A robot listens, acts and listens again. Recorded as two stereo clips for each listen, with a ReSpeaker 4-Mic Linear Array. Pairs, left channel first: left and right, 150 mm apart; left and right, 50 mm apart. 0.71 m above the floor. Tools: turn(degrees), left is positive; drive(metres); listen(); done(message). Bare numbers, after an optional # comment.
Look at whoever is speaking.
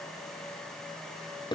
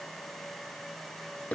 listen()
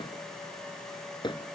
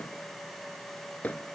listen()
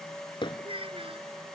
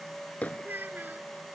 # The child speaking: about 40° right or 140° right.
turn(-40)
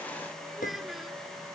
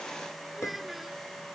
done("Found it: a child speaking, straight ahead.")